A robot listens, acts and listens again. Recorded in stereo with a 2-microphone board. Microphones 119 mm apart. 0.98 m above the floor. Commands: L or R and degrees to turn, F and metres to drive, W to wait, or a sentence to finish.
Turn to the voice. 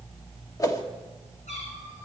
W
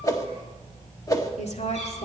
L70
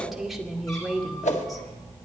Found it: a woman speaking, straight ahead, 2 to 4 m away.